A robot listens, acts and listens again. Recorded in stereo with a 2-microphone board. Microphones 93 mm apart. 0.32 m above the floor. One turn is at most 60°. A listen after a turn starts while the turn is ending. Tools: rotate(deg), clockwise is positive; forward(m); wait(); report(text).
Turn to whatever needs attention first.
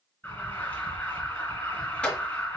rotate(-20)
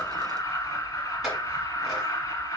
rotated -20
rotate(-60)
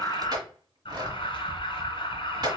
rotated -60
rotate(-60)
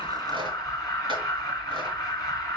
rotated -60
rotate(-45)
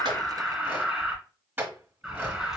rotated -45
rotate(10)
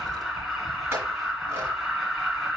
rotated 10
report("Facing the alarm, 2 to 4 m away.")